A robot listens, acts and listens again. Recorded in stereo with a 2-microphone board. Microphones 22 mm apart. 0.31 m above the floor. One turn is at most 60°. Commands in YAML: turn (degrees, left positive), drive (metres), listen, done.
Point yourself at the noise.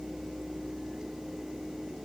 listen: true
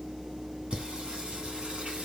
turn: -60
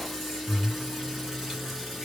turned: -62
turn: -10
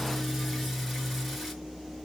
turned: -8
done: "Found it: singing, straight ahead."